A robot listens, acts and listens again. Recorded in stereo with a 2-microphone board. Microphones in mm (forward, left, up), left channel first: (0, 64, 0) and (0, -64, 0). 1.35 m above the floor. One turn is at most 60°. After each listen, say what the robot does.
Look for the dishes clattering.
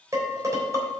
Turn 25° right.
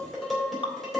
Found it: dishes clattering, straight ahead.